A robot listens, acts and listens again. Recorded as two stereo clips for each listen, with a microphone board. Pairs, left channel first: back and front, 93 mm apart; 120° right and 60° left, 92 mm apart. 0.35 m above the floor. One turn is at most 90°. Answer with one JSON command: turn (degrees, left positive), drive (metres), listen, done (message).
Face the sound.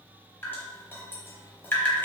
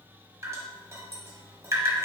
{"turn": 90}
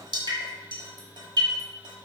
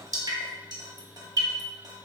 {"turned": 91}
{"turn": 25}
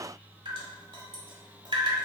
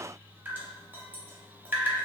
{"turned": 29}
{"done": "Facing the dripping."}